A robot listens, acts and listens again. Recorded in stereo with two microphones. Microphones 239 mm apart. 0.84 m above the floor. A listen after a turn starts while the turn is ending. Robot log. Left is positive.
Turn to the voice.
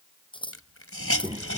note: The child speaking: about 15° right or 165° right.
cmd yaw -15
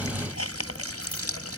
cmd idle
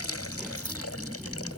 end: Facing the child speaking.